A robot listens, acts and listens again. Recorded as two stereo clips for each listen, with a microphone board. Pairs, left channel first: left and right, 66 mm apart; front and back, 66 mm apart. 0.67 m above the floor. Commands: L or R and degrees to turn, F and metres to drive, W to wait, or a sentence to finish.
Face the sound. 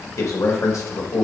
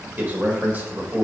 L120
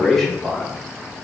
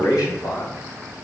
Found it: a man speaking, straight ahead, 2 to 4 m away.